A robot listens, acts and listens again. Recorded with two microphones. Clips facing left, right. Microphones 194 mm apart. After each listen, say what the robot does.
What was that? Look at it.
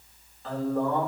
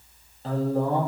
Turn 35° right.
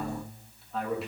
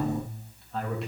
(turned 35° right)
Found it: a man speaking, straight ahead.